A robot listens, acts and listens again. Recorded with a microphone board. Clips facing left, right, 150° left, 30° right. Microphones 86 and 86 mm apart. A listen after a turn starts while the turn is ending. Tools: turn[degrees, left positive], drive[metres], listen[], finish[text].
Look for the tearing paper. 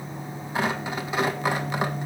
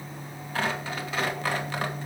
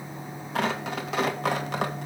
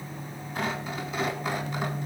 Thought: The tearing paper: 160° left.
Action: turn[160]
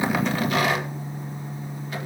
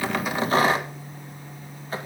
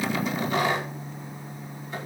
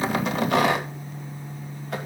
Thought: The tearing paper is now 35° right.
Action: turn[-35]
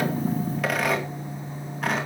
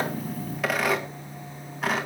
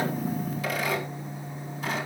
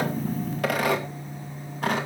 Action: finish[Found it: tearing paper, straight ahead, 2 to 4 m away.]